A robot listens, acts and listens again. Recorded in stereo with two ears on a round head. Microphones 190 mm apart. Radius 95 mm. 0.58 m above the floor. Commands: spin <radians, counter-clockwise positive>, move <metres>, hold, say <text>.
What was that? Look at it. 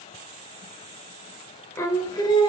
spin 0.44
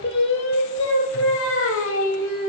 spin 1.92
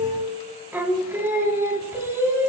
spin -0.17
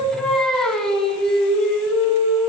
say Facing the singing, over 4 m away.